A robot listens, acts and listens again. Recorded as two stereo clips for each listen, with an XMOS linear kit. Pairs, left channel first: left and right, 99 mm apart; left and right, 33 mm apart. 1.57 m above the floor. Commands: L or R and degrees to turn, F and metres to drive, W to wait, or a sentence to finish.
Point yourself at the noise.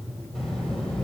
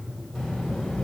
L30
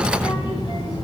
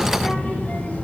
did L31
L140
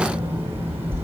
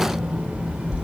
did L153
R25
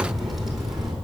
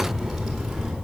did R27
Found it: a child speaking, straight ahead.